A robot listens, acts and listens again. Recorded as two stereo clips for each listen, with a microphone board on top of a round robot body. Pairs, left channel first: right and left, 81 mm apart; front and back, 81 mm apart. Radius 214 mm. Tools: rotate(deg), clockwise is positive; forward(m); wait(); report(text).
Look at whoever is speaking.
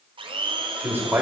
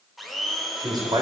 rotate(-155)
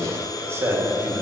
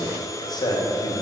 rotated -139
rotate(-40)
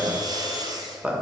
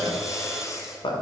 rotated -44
rotate(-15)
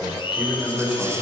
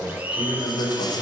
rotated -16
rotate(-10)
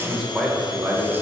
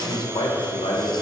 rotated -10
rotate(-10)
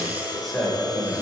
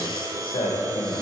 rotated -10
report("Facing the man speaking.")